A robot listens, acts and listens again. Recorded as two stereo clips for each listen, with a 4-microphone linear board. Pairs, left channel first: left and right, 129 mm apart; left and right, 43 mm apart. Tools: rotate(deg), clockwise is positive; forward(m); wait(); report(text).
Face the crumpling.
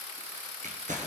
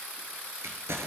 rotate(90)
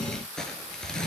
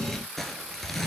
report("Facing the crumpling.")